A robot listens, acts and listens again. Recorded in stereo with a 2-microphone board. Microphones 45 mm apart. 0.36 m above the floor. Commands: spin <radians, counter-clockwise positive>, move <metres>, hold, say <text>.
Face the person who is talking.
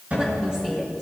spin -0.26
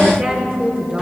spin -0.61
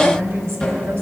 spin -1.92
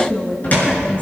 spin 0.52
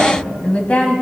spin 0.52
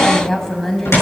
spin 0.17
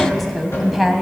say Found it: a woman speaking, straight ahead, 1 to 2 m away.